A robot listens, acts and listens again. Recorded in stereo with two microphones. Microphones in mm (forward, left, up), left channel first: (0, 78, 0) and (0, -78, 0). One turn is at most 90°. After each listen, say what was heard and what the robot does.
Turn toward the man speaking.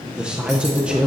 Turn 30° right.
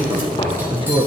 So it is at 145° right. Turn 90° right.
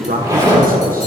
The man speaking is now 85° right. Turn 85° right.
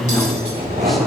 Found it: a man speaking, straight ahead, under 1 m away.